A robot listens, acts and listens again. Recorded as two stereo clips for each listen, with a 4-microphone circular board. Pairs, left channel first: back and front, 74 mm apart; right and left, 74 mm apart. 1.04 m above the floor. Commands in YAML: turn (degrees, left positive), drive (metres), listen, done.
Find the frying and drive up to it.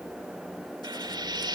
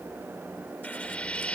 turn: -15
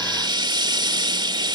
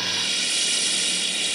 drive: 1.0
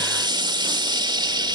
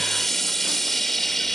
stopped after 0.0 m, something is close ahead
done: "Blocked. The frying is further on, straight ahead."